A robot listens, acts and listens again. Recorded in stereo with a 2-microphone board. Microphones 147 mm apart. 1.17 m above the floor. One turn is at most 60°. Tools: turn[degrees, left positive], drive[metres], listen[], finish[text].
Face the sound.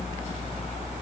Action: listen[]
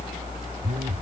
Action: turn[-60]
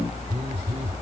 Thought: So it is at 45° right.
Action: turn[-45]
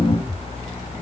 Thought: The phone buzzing is now 10° right.
Action: turn[-10]
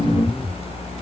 Action: finish[Found it: a phone buzzing, straight ahead.]